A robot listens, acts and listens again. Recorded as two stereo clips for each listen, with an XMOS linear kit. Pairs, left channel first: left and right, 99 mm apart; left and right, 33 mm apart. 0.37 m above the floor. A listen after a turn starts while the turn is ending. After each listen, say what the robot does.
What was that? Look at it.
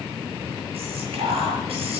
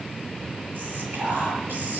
Turn 70° right.
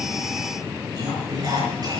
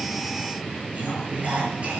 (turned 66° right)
Turn 40° right.
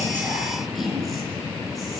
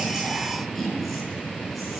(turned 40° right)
Found it: whispering, straight ahead.